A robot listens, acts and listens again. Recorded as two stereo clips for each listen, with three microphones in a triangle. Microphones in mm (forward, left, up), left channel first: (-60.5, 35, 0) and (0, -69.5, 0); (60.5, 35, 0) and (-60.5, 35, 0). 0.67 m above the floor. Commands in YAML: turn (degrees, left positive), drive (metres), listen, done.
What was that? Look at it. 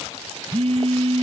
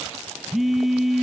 turn: -90
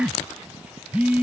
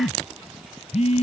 turn: 20
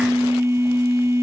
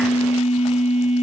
done: "Facing the phone buzzing."